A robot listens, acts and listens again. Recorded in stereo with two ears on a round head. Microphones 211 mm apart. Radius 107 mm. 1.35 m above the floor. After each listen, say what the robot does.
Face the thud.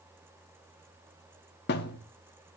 Turn 45° left.
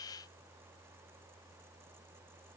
Keep listening.
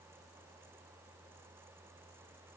I heard a thud, but can't make it out now. It was about straight ahead or 90° left.